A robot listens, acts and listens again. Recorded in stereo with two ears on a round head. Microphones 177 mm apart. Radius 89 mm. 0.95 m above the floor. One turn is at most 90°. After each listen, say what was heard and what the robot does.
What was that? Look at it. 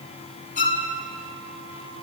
The violin: about 45° left or 135° left. Turn 45° left.
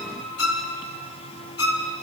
So it is at 90° left. Turn 90° left.
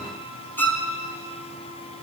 The violin is now 10° left. Turn 10° left.
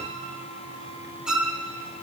Found it: a violin, straight ahead, 2 to 4 m away.